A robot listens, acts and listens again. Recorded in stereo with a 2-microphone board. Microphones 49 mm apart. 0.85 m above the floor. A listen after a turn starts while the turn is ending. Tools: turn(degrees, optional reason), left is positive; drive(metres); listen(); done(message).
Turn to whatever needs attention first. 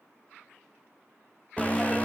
turn(degrees=30, reason="The alarm: about 30° left or 150° left.")
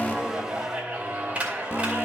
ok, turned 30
turn(degrees=115, reason="So it is at 115° left.")
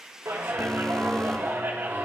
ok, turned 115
listen()
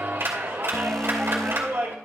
turn(degrees=10, reason="The alarm is now 10° left.")
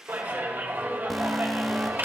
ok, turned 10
done("Found it: an alarm, straight ahead.")